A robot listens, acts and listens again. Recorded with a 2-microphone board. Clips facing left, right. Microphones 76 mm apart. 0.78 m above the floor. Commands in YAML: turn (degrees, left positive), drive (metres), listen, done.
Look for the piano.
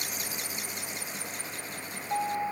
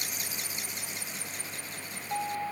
turn: 30
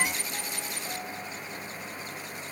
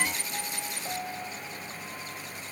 turn: -20
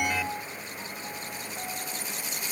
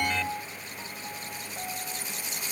done: "Found it: a piano, straight ahead."